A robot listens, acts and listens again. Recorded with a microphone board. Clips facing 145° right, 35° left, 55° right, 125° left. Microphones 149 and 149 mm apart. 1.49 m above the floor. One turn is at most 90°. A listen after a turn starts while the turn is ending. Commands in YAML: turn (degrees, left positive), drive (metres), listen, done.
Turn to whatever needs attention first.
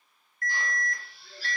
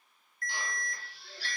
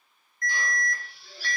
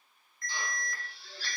turn: -90
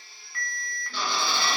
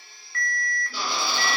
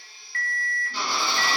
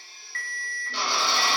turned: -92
turn: -60
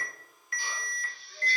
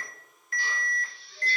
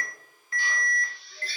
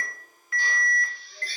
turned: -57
done: "Facing the alarm, 1 to 2 m away."